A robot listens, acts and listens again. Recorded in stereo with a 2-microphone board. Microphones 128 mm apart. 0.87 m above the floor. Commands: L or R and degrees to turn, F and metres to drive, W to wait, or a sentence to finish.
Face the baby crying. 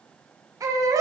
R25
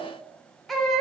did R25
Facing the baby crying.